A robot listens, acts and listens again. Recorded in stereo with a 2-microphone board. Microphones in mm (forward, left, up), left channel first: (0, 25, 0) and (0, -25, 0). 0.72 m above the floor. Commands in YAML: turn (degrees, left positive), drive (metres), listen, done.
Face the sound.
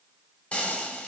turn: 25
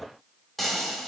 done: "Facing the frying, under 1 m away."